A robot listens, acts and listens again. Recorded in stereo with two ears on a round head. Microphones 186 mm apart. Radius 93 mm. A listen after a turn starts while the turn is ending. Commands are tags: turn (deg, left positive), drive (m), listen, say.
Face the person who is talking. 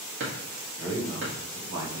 <turn deg="-65"/>
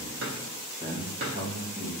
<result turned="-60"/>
<turn deg="-35"/>
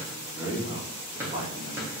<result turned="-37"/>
<turn deg="-20"/>
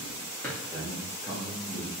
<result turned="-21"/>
<turn deg="-10"/>
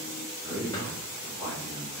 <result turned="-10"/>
<say>Found it: a man speaking, straight ahead.</say>